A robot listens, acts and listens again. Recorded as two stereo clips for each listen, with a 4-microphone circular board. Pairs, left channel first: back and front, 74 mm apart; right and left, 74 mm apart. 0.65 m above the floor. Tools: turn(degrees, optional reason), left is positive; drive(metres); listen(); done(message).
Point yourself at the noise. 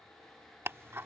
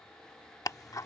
turn(degrees=-55, reason="The ticking: 55° right.")
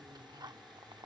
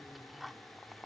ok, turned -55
done("Found it: ticking, straight ahead.")